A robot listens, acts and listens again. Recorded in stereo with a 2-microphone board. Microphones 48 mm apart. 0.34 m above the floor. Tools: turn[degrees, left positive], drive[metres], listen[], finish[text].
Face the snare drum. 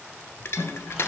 Thought: The snare drum: about 60° left or 120° left.
Action: turn[60]
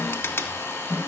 Action: finish[Found it: a snare drum, straight ahead.]